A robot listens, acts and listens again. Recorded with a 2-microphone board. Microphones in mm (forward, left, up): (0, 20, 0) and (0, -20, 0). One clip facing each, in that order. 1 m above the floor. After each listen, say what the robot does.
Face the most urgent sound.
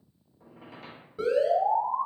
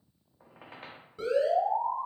Turn 30° left.
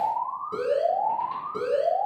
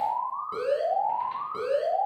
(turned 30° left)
Turn 20° right.
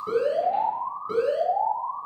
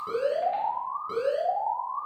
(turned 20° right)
Facing the alarm.